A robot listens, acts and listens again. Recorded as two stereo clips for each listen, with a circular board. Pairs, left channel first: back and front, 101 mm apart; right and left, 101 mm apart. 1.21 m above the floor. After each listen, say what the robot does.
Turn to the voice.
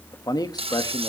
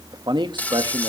Turn 130° left.
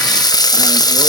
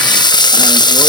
Keep listening.
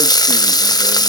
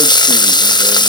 Keep listening.
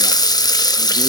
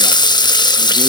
I heard a man speaking from this way, but can't make it out now.